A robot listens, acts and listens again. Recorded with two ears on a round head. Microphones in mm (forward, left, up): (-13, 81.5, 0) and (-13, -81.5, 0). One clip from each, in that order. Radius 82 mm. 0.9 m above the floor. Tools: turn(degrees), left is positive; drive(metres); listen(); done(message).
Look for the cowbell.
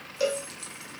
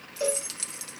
turn(degrees=20)
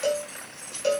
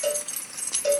done("Facing the cowbell.")